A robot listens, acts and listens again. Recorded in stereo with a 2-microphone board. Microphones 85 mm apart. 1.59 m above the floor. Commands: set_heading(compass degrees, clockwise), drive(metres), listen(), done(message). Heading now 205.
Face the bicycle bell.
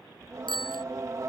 set_heading(115)
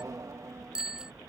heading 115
set_heading(125)
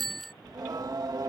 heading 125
done("Facing the bicycle bell.")